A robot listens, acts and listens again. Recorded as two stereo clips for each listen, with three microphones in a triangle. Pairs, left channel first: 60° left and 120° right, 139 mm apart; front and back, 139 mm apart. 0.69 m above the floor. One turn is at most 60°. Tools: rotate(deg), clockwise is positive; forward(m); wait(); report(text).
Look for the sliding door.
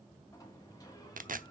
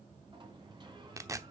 rotate(-60)
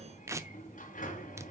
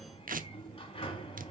rotate(-50)
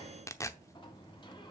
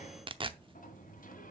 report("Facing the sliding door.")